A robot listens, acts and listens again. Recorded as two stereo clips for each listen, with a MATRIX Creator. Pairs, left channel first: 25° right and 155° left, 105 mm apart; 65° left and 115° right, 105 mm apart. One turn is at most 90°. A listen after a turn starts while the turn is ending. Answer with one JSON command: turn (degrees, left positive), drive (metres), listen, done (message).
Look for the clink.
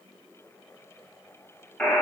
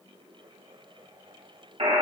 {"listen": true}
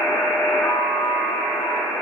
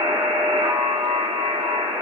{"listen": true}
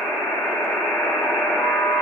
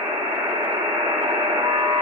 {"done": "I can't make out a clink to turn to."}